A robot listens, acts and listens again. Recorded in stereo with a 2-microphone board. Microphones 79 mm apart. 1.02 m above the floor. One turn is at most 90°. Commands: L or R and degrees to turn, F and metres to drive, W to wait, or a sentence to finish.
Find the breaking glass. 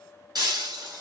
R55
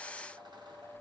W
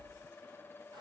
I heard breaking glass, but can't make it out now. It was about straight ahead or 70° right.